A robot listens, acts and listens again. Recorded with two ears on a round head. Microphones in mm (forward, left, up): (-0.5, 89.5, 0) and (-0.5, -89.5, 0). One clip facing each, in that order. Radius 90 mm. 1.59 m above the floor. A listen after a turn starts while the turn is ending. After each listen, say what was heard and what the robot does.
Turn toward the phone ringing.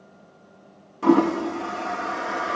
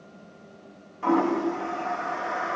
Keep listening.
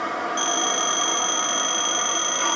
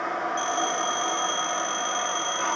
The phone ringing: about 70° left or 110° left. Turn 70° left.
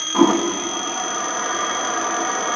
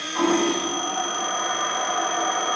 Keep listening.
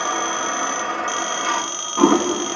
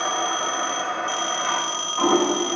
So it is at 20° left. Turn 20° left.
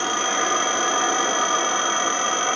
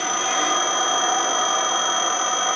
Facing the phone ringing.